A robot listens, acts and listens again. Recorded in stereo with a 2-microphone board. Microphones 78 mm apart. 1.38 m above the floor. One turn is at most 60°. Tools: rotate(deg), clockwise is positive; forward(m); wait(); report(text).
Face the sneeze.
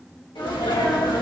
rotate(-60)
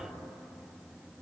rotate(-30)
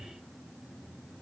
report("Facing where the sneeze came from. I can't hear it now.")